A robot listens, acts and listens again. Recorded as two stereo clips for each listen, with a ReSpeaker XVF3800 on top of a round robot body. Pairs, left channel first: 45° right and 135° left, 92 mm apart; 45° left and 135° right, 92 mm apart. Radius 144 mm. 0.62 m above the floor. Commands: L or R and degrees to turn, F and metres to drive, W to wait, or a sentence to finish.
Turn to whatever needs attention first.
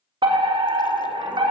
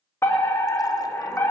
L110
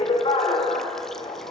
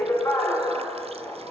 R15
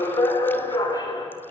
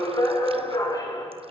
Facing the fire alarm.